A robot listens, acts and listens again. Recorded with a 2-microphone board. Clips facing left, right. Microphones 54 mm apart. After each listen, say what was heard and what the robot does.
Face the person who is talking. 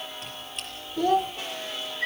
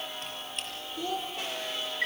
The child speaking: about 55° left or 125° left. Turn 55° left.
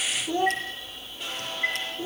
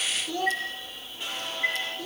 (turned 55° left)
So it is at 25° left. Turn 25° left.
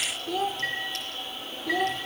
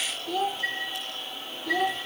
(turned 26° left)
Found it: a child speaking, straight ahead, under 1 m away.